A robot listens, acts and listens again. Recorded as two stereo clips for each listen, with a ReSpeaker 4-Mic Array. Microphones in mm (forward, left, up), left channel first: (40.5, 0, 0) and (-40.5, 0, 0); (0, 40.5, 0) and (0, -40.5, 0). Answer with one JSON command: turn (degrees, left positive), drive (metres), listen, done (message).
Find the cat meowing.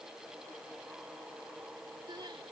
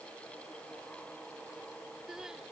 {"listen": true}
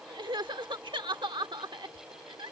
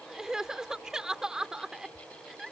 {"listen": true}
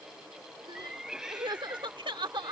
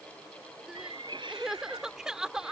{"turn": -100}
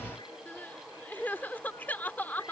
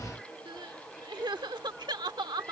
{"listen": true}
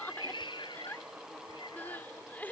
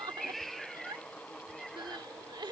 {"done": "Facing the cat meowing."}